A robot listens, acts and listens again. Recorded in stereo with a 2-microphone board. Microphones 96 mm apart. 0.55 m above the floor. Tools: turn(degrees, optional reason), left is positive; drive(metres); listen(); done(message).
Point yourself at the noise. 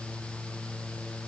listen()
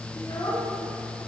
turn(degrees=50, reason="The child speaking: about 50° left or 130° left.")
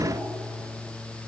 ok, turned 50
listen()
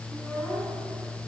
turn(degrees=10, reason="So it is at 10° left.")
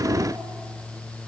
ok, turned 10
listen()
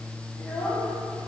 turn(degrees=10, reason="The child speaking is now 10° left.")
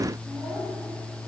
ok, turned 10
done("Facing the child speaking.")